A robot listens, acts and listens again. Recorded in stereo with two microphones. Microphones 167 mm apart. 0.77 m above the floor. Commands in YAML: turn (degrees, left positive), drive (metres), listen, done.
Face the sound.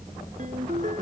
turn: -50
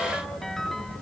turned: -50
done: "Facing the ringtone."